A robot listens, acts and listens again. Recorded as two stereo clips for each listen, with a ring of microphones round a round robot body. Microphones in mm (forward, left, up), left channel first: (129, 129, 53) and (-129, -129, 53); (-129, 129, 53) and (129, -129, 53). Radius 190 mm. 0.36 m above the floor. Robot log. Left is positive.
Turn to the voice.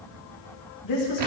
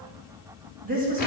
note: The woman speaking: 20° left.
cmd yaw +20
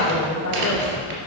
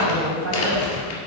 end: Facing the woman speaking, 2 to 4 m away.